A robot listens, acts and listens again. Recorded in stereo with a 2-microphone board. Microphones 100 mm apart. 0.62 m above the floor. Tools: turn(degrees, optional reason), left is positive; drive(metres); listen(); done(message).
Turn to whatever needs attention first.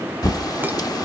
listen()
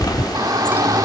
turn(degrees=-40, reason="The shout: about 40° right or 140° right.")
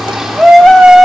done("Facing the shout, 1 to 2 m away.")